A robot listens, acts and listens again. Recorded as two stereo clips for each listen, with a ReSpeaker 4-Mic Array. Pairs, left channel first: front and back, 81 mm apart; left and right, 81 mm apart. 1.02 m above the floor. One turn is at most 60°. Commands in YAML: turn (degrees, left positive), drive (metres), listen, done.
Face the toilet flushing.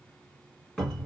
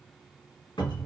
listen: true
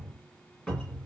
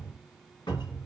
listen: true
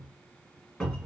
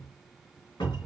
done: "I can't make out a toilet flushing to turn to."